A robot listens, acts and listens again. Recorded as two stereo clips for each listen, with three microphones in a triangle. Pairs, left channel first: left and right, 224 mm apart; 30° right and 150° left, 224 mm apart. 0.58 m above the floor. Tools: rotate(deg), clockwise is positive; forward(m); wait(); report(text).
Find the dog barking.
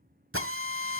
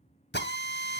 wait()
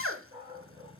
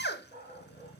rotate(160)
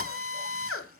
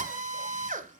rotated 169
rotate(-10)
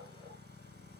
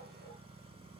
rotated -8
wait()
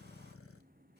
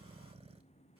report("Facing where the dog barking came from. I can't hear it now.")